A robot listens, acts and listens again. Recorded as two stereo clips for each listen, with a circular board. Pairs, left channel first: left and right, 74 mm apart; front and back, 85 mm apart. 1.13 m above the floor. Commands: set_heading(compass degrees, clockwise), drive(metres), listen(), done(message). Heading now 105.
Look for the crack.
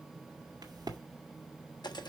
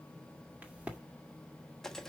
set_heading(210)
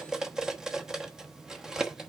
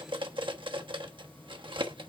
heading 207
done("Facing where the crack came from. I can't hear it now.")